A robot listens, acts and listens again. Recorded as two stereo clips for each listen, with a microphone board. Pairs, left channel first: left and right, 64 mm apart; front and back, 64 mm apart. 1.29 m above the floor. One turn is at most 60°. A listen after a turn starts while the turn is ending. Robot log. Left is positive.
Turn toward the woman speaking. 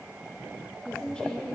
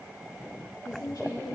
note: The woman speaking: 10° left.
cmd yaw +10
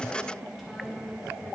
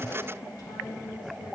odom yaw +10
end: Found it: a woman speaking, straight ahead, 2 to 4 m away.